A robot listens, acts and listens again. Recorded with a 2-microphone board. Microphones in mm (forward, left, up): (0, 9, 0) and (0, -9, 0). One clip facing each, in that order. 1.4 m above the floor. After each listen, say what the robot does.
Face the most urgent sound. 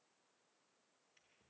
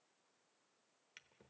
Keep listening.
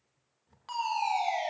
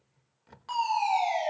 Turn 30° left.
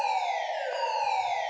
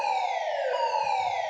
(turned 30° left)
Turn 145° left.
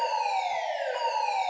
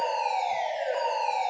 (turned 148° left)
Facing the fire alarm.